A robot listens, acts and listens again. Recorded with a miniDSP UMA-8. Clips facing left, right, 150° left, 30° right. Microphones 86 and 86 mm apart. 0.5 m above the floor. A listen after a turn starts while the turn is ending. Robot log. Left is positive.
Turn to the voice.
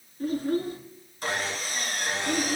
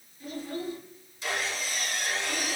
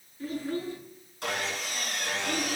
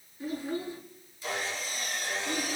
note: The child speaking: 55° left.
cmd yaw +55
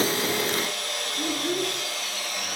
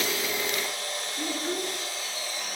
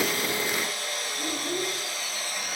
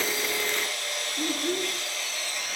end: Found it: a child speaking, straight ahead, over 4 m away.